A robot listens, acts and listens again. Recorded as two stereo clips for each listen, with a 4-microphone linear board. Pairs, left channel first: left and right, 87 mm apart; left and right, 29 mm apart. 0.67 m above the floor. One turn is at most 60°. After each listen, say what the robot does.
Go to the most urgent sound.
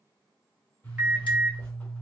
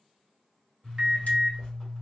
Turn 30° right.
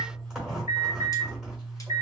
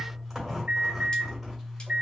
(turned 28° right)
Turn 60° right.
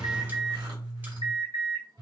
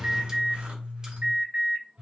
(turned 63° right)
Turn 60° right.
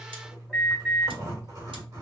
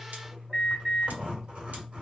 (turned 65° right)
Turn 10° right.
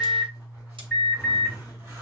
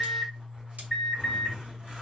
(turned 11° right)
Drive 1.0 m forward.
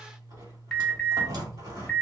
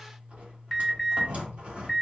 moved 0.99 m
Drive 1.0 m forward.
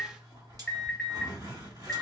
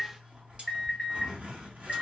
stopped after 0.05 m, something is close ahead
I am next to the alarm.